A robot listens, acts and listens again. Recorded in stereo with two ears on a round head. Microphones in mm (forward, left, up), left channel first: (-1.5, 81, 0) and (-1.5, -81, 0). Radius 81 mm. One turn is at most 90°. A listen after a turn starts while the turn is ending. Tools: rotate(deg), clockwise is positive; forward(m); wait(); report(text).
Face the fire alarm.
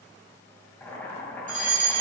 rotate(45)
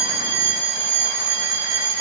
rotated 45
rotate(85)
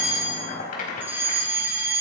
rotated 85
rotate(15)
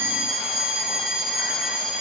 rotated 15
report("Facing the fire alarm, 2 to 4 m away.")